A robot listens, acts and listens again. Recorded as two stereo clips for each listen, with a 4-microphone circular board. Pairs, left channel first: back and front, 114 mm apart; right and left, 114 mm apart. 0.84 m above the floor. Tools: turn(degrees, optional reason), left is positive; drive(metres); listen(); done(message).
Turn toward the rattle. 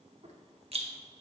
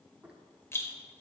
turn(degrees=-20, reason="The rattle: 20° right.")
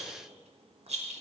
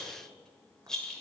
done("Facing the rattle.")